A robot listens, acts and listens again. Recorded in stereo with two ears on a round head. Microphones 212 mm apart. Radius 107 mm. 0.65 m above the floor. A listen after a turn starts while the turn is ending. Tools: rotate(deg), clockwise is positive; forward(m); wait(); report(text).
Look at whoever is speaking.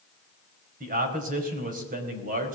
rotate(40)
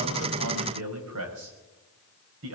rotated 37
rotate(105)
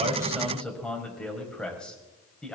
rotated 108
report("Found it: a man speaking, straight ahead.")